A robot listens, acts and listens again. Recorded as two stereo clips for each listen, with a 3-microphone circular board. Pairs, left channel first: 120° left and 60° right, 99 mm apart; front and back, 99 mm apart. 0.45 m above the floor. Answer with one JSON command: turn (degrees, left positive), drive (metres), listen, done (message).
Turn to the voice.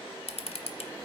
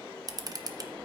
{"listen": true}
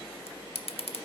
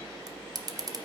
{"listen": true}
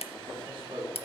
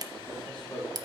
{"turn": -85}
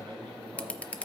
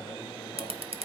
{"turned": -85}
{"turn": -20}
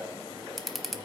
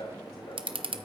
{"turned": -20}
{"listen": true}
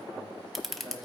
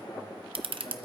{"listen": true}
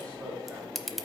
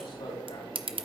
{"done": "I heard a man speaking from this way, but can't make it out now."}